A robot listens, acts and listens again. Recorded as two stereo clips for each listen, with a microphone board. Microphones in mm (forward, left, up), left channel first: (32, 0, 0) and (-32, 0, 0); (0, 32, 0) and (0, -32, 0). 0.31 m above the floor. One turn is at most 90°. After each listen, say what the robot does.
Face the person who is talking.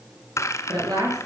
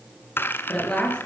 Turn 90° left.
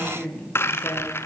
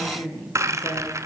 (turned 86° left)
Turn 70° left.
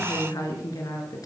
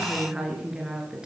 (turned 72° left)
Turn 10° right.
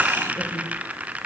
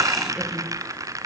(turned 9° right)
Keep listening.
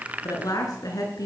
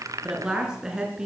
Turn 10° right.
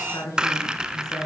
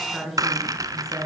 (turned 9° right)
Found it: a woman speaking, straight ahead.